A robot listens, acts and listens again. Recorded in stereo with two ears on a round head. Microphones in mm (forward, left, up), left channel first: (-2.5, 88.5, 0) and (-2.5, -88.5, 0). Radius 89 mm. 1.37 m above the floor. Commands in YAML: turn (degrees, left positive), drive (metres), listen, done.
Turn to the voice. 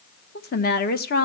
turn: 50
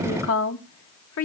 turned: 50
turn: 75
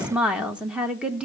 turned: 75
done: "Found it: a woman speaking, straight ahead, 1 to 2 m away."